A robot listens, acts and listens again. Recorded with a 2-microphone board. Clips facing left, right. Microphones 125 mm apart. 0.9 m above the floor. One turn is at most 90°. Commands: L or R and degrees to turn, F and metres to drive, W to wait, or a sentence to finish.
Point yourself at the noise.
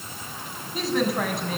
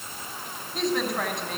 L30
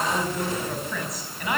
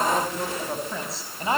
R30
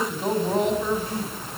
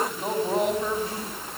Facing the woman speaking, over 4 m away.